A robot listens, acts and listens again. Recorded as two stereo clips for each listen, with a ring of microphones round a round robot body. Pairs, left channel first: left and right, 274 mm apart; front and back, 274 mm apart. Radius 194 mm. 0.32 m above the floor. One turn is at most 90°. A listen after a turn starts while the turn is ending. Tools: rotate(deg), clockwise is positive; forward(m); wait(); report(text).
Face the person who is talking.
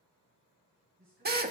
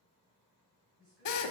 rotate(90)
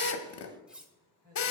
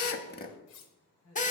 rotate(40)
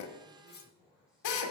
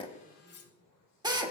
report("Facing the man speaking.")